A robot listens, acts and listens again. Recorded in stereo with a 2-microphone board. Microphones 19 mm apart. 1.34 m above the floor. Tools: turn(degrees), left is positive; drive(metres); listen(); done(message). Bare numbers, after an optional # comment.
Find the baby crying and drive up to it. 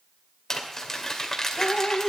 listen()
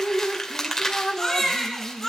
turn(30)
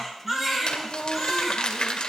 # So it is at 20° right.
turn(-20)
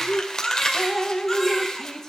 drive(1.0)
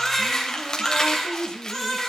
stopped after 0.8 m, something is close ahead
done("Blocked. The baby crying is further on, straight ahead.")